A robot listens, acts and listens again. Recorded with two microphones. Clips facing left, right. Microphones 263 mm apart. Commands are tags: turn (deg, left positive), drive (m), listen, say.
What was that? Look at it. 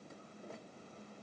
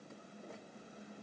<listen/>
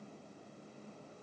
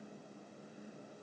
<listen/>
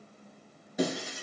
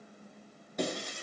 <turn deg="30"/>
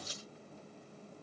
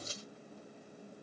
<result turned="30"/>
<turn deg="-25"/>
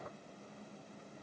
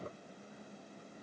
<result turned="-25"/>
<say>Facing where the breaking glass came from. I can't hear it now.</say>